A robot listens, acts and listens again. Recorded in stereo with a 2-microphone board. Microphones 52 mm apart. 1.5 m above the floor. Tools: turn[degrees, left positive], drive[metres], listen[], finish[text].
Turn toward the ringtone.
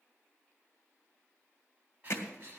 Action: listen[]
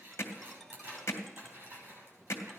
Action: turn[30]
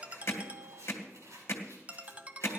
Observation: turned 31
Thought: So it is at 30° right.
Action: turn[-30]
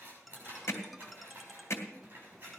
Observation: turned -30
Action: finish[Found it: a ringtone, straight ahead.]